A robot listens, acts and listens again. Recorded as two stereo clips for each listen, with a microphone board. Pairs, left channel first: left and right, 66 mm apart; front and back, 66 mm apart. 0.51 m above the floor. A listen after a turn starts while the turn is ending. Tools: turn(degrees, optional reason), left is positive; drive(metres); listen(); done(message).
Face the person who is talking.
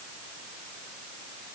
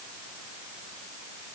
listen()
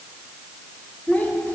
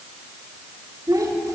turn(degrees=155, reason="The child speaking: 155° left.")
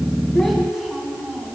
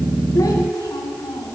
done("Facing the child speaking, 2 to 4 m away.")